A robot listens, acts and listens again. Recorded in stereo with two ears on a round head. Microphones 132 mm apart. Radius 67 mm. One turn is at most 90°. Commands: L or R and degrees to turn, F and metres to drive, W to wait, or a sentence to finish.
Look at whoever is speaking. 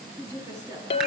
R20
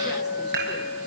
W
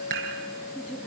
Found it: a woman speaking, straight ahead.